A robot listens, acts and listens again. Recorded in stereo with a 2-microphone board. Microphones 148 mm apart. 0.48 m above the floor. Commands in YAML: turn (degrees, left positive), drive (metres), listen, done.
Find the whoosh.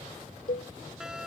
listen: true
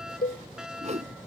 turn: -55
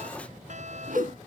listen: true
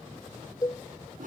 turn: -75
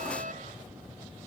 listen: true
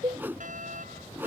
turn: -15
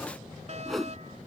done: "Facing the whoosh."